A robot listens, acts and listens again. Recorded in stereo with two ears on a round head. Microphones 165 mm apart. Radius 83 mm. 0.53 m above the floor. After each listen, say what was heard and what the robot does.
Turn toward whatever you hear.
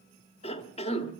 The cough: about 30° left or 150° left. Turn 30° left.
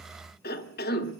So it is at 115° left. Turn 115° left.
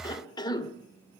The cough is now 25° left. Turn 25° left.
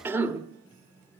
The cough is now 15° right. Turn 15° right.
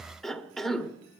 Facing the cough.